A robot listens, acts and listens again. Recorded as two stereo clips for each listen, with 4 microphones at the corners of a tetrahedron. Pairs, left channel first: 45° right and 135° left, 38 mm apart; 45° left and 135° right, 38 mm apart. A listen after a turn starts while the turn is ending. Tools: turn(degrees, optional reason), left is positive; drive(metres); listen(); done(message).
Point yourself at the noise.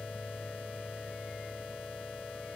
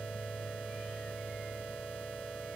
listen()
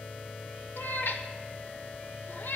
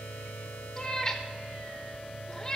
turn(degrees=-30, reason="The cat meowing: 30° right.")
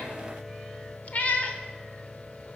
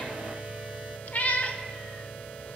done("Facing the cat meowing, under 1 m away.")